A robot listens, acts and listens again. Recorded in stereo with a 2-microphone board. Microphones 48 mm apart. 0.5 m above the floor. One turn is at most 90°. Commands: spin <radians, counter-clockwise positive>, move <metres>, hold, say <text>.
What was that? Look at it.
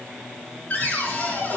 spin 0.61
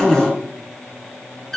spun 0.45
spin 0.17
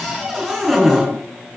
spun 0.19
say Found it: a cupboard door, straight ahead, 2 to 4 m away.